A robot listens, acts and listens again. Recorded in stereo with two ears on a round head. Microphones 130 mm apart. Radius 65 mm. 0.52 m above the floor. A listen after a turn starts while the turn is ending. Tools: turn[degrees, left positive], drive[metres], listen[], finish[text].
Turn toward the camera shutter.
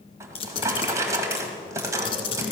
Thought: The camera shutter: about 35° left or 145° left.
Action: turn[35]
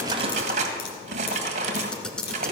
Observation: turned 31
Action: finish[Facing the camera shutter.]